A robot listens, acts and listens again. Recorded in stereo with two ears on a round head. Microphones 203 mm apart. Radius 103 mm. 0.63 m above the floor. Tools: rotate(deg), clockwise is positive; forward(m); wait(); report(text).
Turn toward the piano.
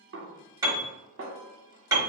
rotate(15)
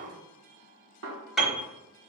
report("Found it: a piano, straight ahead.")